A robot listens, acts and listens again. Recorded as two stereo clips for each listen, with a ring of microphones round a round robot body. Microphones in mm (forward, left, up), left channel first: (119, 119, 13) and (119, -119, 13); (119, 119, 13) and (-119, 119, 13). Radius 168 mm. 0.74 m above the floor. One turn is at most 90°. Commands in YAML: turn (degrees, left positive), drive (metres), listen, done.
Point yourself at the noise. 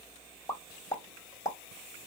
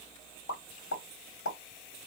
turn: 15
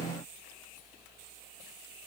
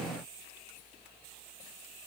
done: "I heard a pop from this way, but can't make it out now."